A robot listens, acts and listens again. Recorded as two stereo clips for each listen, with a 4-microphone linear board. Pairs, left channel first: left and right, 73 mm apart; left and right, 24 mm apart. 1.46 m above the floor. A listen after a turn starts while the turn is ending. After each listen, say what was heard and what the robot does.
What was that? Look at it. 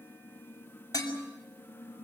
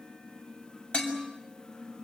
The dishes clattering: about 50° left or 130° left. Turn 50° left.
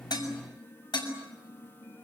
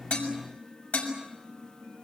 So it is at 80° left. Turn 80° left.
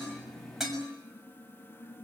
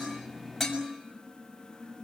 Facing the dishes clattering, over 4 m away.